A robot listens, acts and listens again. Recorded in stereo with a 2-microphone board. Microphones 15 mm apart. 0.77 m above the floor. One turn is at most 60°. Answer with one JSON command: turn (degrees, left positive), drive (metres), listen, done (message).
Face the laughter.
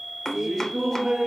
{"turn": -35}
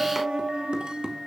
{"turn": -60}
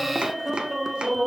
{"turn": -25}
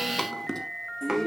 {"turn": 25}
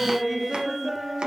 {"done": "Found it: laughter, straight ahead."}